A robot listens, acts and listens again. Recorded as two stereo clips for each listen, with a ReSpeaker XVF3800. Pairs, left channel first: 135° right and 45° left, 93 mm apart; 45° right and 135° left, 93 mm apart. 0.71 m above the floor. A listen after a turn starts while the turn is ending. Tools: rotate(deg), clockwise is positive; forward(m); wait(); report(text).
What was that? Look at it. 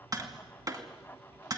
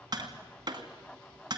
rotate(-95)
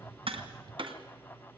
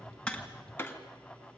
rotate(-20)
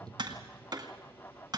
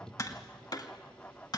report("Found it: tapping, straight ahead.")